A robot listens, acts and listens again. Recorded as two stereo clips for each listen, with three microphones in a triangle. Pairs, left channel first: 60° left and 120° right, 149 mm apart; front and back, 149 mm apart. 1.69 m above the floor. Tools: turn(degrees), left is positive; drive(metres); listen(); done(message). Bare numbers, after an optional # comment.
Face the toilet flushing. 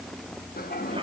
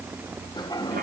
# The toilet flushing: 65° left.
turn(65)
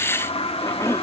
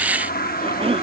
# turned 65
# The toilet flushing is now 10° left.
turn(10)
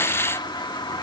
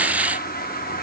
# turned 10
done("Facing the toilet flushing.")